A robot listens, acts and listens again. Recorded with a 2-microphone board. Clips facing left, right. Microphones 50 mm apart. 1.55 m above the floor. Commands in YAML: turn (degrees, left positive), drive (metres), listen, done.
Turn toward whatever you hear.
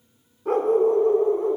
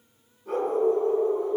turn: 55
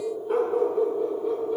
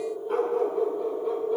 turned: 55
done: "Found it: a dog barking, straight ahead, 2 to 4 m away."